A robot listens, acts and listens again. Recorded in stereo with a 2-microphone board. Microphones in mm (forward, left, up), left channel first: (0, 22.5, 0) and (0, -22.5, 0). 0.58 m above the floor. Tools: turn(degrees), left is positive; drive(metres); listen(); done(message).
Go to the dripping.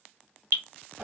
turn(degrees=-60)
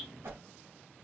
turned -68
listen()
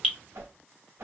drive(metres=1.0)
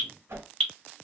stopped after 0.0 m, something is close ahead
done("Blocked. The dripping is further on, straight ahead.")